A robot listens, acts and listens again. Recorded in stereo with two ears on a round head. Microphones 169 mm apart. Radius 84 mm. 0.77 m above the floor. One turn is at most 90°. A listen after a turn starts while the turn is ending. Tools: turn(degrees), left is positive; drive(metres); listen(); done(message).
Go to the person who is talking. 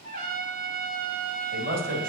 turn(degrees=-45)
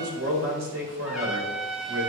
turn(degrees=-85)
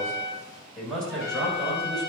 drive(metres=1.0)
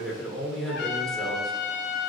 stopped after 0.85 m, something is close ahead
done("Something is in my way. I am facing the man speaking but have not reached it.")